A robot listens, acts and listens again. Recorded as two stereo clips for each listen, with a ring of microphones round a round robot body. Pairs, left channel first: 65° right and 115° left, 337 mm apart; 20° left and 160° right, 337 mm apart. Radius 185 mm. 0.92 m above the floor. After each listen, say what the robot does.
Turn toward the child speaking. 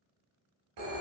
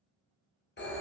Keep listening.
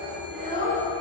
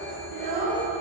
Turn 135° right.
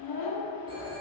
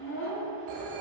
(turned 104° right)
Turn 35° right.
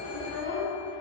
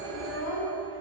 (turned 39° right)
Facing the child speaking, 1 to 2 m away.